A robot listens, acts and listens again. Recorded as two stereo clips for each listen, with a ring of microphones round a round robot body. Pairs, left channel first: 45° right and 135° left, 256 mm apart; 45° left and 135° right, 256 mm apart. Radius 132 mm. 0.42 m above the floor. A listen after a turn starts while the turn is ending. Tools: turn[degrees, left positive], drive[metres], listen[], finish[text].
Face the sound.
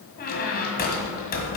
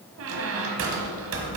Thought: The squeak: 100° right.
Action: turn[-100]
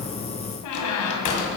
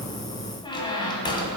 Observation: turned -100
Thought: The squeak is now 30° right.
Action: turn[-30]
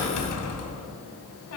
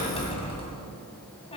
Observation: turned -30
Thought: The squeak is now 25° right.
Action: turn[-25]
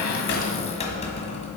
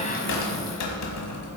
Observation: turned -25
Thought: The squeak is now 20° left.
Action: turn[20]
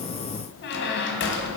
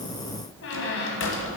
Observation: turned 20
Action: finish[Found it: a squeak, straight ahead, 1 to 2 m away.]